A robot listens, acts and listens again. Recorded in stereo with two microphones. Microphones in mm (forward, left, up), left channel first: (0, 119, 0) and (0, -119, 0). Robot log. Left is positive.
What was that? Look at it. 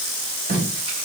note: The tape being pulled: about 35° right or 145° right.
cmd yaw -35
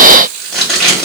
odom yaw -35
end: Facing the tape being pulled, over 4 m away.